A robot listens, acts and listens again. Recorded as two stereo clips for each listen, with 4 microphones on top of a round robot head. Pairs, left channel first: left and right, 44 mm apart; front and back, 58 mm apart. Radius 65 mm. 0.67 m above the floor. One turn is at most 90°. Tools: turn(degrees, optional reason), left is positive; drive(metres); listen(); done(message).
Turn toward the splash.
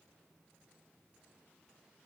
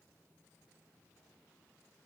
listen()
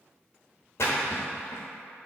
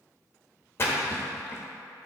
turn(degrees=50, reason="The splash: 50° left.")
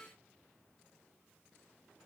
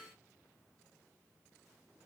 done("Facing where the splash came from. I can't hear it now.")